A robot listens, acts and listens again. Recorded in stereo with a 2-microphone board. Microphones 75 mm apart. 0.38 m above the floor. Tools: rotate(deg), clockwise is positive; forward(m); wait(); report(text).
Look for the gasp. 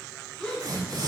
rotate(-30)
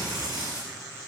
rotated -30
wait()
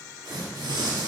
report("I heard a gasp, but can't make it out now. It was about 20° right or 140° left.")